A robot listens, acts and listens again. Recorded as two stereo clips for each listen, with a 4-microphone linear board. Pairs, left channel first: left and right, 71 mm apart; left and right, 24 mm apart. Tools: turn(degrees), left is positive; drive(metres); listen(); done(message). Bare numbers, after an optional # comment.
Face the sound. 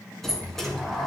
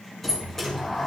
turn(30)
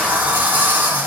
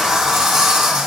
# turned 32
# So it is at 25° right.
turn(-25)
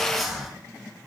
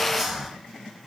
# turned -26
done("Found it: a sliding door, straight ahead.")